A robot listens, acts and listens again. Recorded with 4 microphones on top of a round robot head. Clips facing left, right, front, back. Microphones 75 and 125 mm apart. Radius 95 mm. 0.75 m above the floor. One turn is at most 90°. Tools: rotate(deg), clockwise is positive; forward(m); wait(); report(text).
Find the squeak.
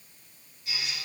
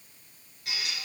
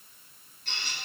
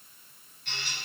rotate(60)
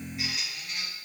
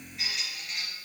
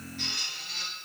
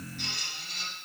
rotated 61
report("Facing the squeak, 2 to 4 m away.")